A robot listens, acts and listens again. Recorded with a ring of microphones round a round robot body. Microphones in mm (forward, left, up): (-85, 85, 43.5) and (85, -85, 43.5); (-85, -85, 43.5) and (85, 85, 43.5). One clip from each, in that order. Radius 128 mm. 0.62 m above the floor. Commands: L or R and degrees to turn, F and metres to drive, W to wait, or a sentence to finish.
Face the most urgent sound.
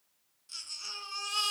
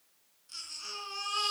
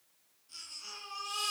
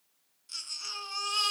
L75
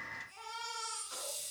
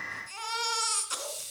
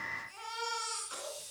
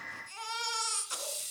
Found it: a baby crying, straight ahead.